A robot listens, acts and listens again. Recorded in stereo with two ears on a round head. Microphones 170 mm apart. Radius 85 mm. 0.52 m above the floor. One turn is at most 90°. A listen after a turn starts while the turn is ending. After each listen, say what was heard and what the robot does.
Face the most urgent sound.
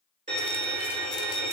Keep listening.
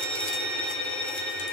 Keep listening.
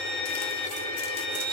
I can't make out anything urgent, only a violin.